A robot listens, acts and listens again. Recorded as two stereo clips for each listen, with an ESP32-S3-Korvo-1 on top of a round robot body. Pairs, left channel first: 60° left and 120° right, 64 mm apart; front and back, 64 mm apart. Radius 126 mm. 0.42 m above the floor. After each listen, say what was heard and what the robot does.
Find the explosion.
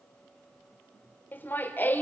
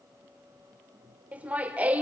Keep listening.
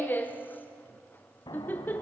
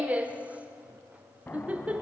The explosion: 65° left. Turn 65° left.
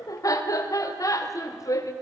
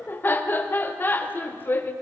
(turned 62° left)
I heard an explosion from this way, but can't make it out now.